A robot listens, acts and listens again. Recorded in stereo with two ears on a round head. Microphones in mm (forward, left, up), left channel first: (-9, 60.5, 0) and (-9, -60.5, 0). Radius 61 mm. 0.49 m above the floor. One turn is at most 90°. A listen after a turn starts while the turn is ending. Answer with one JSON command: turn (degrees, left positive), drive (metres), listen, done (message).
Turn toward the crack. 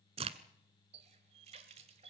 {"turn": -50}
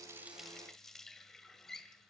{"listen": true}
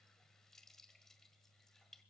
{"done": "I heard a crack, but can't make it out now. It was about straight ahead or 80° right."}